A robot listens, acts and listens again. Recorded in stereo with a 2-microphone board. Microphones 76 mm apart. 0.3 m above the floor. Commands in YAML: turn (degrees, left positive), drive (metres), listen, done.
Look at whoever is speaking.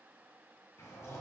listen: true
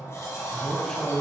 turn: 30
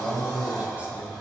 turn: -25
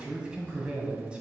turn: -15
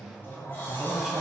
done: "Found it: a man speaking, straight ahead."